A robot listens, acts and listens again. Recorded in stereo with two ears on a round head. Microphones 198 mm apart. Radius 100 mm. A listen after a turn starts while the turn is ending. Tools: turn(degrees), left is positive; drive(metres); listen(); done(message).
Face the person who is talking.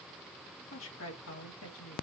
turn(degrees=70)
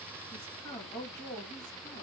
turn(degrees=20)
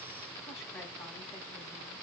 listen()
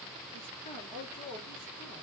turn(degrees=25)
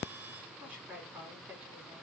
done("Facing the woman speaking.")